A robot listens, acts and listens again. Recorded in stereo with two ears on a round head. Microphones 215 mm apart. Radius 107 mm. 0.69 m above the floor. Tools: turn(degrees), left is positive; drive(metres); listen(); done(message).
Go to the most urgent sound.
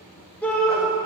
turn(degrees=30)
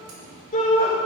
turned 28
turn(degrees=145)
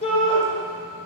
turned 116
turn(degrees=30)
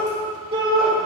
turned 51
turn(degrees=-20)
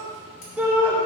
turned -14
turn(degrees=-10)
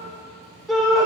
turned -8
drive(metres=1.0)
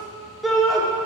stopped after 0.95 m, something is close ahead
done("I am next to the shout.")